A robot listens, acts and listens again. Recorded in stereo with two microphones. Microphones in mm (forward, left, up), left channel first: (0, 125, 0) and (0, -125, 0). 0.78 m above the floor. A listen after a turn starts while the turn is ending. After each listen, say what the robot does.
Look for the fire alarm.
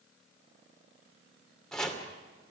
Keep listening.
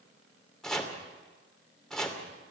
Keep listening.
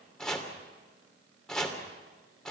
I can't make out a fire alarm, only chopping.